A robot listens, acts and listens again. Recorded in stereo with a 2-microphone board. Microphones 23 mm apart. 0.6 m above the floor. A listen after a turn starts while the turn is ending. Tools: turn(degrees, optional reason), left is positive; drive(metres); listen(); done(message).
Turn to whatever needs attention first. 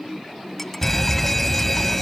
turn(degrees=30)
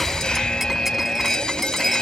turn(degrees=135, reason="So it is at 135° left.")
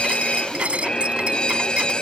turn(degrees=45, reason="The fire alarm is now 45° left.")
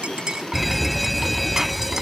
done("Found it: a fire alarm, straight ahead.")